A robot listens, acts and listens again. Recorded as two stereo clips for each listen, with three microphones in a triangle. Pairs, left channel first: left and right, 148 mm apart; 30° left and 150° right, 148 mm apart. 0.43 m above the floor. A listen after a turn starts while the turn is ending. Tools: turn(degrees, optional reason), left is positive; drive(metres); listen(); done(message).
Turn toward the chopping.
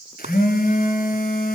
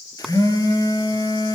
turn(degrees=-60, reason="The chopping: 60° right.")
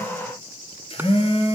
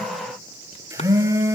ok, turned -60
listen()
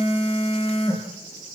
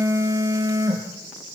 listen()
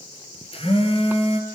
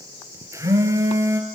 done("I heard chopping from this way, but can't make it out now.")